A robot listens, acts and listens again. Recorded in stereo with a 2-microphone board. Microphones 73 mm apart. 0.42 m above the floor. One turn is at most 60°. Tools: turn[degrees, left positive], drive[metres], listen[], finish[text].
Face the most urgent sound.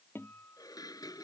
Action: listen[]
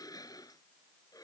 Action: listen[]
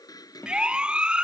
Action: turn[-30]
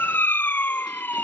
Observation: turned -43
Thought: So it is at 30° left.
Action: turn[30]
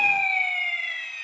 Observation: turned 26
Action: finish[Facing the siren.]